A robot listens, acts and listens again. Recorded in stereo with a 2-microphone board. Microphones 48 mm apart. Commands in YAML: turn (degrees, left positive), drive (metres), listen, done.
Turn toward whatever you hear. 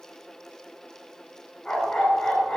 turn: 30
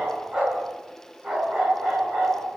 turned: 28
turn: -20
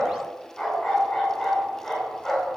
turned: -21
done: "Found it: a dog barking, straight ahead, over 4 m away."